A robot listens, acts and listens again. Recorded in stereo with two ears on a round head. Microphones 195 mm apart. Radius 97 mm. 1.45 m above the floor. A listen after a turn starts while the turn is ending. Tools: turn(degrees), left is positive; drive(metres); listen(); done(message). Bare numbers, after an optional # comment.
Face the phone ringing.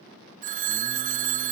# The phone ringing: about 35° right or 145° right.
turn(-35)
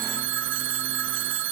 # So it is at 105° right.
turn(-105)
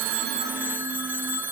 # The phone ringing is now 10° right.
turn(-10)
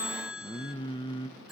done("Found it: a phone ringing, straight ahead, 1 to 2 m away.")